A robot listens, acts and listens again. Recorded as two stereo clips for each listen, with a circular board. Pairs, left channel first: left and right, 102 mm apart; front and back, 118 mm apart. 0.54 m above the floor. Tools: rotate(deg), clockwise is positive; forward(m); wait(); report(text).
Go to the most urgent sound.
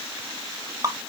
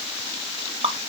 wait()
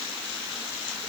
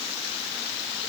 wait()
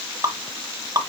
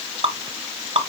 report("I can't make out anything urgent, only dripping.")